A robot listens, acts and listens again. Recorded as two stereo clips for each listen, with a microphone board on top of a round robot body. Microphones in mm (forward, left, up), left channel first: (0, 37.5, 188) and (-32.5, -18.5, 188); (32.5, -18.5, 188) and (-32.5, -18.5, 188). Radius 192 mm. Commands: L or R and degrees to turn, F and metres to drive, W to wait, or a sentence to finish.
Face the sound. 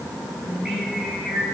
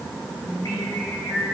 R35
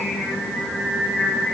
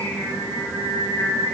R10
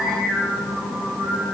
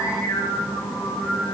Found it: singing, straight ahead.